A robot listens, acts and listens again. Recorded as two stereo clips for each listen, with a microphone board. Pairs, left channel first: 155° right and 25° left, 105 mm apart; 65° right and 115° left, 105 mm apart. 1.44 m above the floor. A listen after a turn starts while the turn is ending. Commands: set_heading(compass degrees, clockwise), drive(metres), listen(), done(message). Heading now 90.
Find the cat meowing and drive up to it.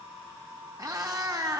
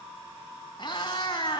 set_heading(115)
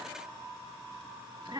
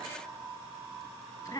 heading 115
set_heading(130)
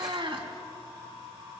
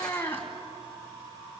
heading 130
drive(1.0)
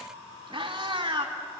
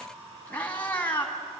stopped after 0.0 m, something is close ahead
done("Something is in my way. I am facing the cat meowing but have not reached it.")